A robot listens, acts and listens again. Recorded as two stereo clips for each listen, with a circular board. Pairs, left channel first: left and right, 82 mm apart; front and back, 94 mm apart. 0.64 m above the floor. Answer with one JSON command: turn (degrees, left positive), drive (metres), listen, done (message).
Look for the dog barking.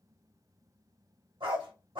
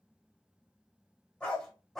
{"turn": -85}
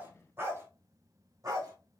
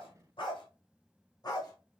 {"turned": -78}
{"turn": -45}
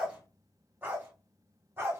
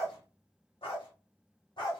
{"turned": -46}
{"turn": -30}
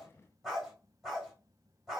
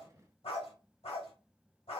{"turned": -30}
{"done": "Found it: a dog barking, straight ahead."}